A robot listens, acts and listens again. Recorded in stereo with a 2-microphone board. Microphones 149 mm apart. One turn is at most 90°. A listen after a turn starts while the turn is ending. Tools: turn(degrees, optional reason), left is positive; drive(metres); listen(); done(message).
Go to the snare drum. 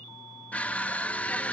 listen()
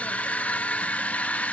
listen()
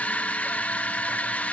done("I can't make out a snare drum to turn to.")